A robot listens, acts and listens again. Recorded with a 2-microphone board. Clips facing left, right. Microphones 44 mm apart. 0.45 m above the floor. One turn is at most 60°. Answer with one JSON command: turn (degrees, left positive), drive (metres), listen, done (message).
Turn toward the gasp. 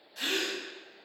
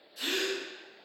{"turn": 60}
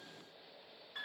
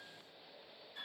{"listen": true}
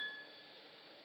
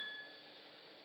{"done": "I heard a gasp, but can't make it out now. It was about straight ahead or 60° left."}